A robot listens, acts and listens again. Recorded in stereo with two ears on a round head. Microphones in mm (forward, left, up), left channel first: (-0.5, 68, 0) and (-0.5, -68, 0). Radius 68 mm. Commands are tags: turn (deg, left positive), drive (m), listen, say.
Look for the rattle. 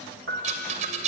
<turn deg="-50"/>
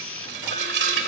<turn deg="-80"/>
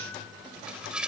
<say>Found it: a rattle, straight ahead.</say>